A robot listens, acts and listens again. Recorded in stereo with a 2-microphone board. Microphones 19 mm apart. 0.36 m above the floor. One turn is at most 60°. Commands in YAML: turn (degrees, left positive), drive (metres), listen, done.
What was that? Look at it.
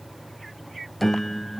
turn: 30
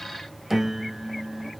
turn: -20
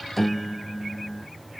done: "Found it: a piano, straight ahead."